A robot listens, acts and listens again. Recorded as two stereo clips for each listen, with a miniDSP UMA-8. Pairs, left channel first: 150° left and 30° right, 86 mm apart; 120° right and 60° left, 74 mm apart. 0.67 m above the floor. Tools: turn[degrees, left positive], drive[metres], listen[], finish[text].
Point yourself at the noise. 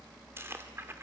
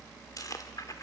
Action: listen[]
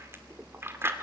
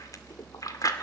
Thought: The chewing: 90° right.
Action: turn[-90]
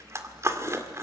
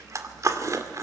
Thought: The chewing is now 20° left.
Action: turn[20]
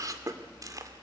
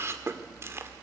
Thought: The chewing is now 10° left.
Action: turn[10]
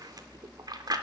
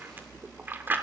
Action: finish[Found it: chewing, straight ahead.]